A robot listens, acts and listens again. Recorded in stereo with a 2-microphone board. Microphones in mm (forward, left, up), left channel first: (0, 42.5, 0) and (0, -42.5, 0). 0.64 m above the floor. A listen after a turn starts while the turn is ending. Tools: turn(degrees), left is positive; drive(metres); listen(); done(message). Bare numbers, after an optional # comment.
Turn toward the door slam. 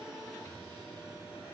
listen()
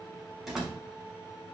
turn(-30)
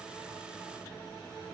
listen()
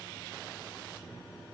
done("I heard a door slam, but can't make it out now. It was about 25° left or 145° right.")